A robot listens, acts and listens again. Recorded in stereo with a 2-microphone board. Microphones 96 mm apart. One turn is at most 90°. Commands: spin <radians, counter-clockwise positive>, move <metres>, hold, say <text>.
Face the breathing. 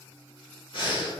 spin 0.96
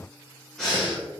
say Found it: breathing, straight ahead.